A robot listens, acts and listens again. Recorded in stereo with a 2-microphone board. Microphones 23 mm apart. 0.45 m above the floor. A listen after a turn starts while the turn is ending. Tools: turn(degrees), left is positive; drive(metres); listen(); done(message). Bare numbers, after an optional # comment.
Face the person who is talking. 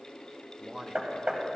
# The man speaking: about 35° right or 145° right.
turn(-35)
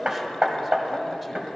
listen()
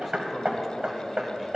listen()
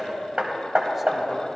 done("I heard a man speaking, but can't make it out now. It was about straight ahead or 110° right.")